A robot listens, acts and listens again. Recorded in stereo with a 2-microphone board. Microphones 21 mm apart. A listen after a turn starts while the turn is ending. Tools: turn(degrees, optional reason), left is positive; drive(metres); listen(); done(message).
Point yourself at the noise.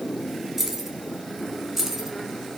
turn(degrees=-30)
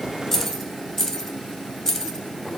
turn(degrees=30, reason="So it is at 30° left.")
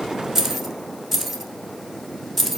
turn(degrees=10, reason="The keys jangling is now 10° left.")
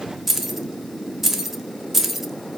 done("Found it: keys jangling, straight ahead, 1 to 2 m away.")